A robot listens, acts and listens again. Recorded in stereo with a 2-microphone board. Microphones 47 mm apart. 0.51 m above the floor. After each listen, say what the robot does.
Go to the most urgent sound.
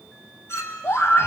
Turn 70° left.
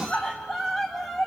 Drive 1.0 m forward.
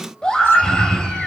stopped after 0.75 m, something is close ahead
Turn 15° left.
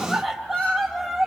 Something is in my way. I am facing the scream but have not reached it.